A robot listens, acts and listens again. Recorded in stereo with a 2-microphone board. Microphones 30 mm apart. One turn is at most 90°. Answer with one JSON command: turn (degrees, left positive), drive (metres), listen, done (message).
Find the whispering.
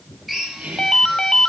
{"turn": -50}
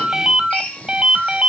{"listen": true}
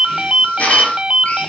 {"listen": true}
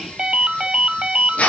{"turn": -10}
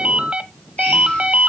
{"listen": true}
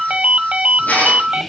{"done": "Facing the whispering, 2 to 4 m away."}